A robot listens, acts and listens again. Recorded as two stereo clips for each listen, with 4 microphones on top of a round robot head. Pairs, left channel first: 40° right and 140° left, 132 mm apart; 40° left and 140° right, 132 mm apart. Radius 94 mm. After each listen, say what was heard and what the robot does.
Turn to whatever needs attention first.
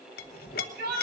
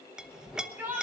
The shout: 140° left. Turn 140° left.
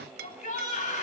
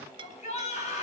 Facing the shout, over 4 m away.